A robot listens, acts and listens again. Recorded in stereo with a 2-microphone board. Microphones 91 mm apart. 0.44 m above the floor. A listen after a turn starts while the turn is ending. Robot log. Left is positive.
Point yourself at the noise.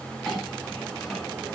cmd yaw +30
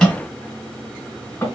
note: So it is at 150° left.
cmd yaw +150
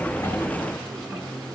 cmd idle
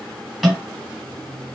end: Found it: a clink, straight ahead.